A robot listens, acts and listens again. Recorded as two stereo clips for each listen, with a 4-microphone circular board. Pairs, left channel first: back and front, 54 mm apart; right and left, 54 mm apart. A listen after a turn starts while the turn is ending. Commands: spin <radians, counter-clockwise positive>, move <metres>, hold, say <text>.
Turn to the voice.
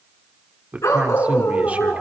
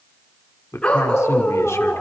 spin -1.13
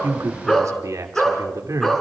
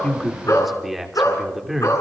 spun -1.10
say Found it: a man speaking, straight ahead.